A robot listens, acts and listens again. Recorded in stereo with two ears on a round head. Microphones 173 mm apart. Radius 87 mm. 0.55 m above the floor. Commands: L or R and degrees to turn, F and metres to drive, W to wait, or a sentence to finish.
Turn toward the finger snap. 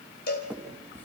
L30
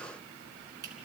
R20
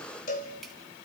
W
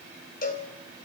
W
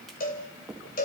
Found it: a finger snap, straight ahead.